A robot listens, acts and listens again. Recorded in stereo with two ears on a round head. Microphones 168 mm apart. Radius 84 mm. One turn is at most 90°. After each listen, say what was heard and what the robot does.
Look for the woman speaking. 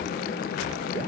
Keep listening.
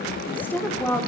Turn 30° left.
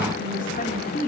So it is at 135° left. Turn 90° left.
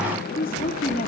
The woman speaking is now 45° left. Turn 45° left.
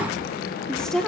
Found it: a woman speaking, straight ahead.